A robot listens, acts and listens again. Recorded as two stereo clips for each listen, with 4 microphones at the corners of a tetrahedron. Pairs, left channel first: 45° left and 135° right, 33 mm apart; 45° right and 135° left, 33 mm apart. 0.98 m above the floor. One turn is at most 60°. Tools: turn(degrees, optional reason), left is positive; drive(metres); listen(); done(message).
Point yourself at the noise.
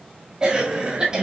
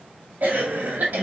turn(degrees=60, reason="The cough: 160° left.")
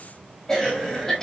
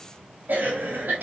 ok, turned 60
turn(degrees=60, reason="The cough is now 115° left.")
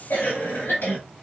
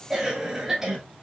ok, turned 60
turn(degrees=55, reason="The cough is now 55° left.")
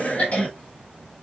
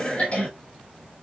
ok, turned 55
done("Found it: a cough, straight ahead.")